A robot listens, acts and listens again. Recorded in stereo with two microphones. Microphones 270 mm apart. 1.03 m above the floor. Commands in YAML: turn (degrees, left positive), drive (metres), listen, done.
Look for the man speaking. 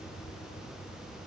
listen: true
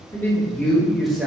turn: -30
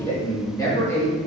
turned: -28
turn: 30
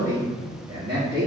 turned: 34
turn: -40
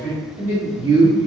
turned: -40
turn: -10
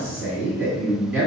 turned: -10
done: "Facing the man speaking, 2 to 4 m away."